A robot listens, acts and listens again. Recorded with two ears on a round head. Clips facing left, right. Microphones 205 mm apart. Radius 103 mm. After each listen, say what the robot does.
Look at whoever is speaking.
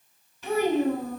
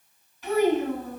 Turn 90° left.
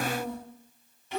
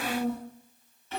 Turn 10° left.
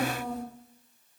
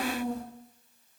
Facing the child speaking.